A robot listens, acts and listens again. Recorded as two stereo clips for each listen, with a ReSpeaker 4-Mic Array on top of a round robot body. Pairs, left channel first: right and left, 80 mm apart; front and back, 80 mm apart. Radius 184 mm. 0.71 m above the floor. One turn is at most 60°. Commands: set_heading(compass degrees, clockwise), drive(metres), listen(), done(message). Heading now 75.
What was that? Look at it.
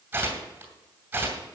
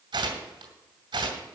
set_heading(15)
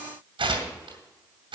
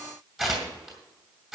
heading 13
set_heading(313)
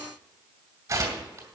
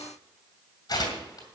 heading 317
set_heading(277)
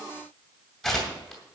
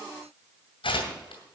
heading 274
done("Found it: tearing paper, straight ahead, 2 to 4 m away.")